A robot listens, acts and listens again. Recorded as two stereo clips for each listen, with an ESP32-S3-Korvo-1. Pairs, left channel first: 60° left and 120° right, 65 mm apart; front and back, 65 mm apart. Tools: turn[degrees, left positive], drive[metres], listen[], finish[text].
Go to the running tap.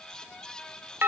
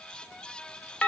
Action: listen[]
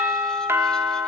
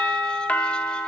Action: listen[]
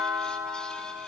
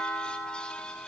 Action: finish[I can't make out a running tap, only a doorbell.]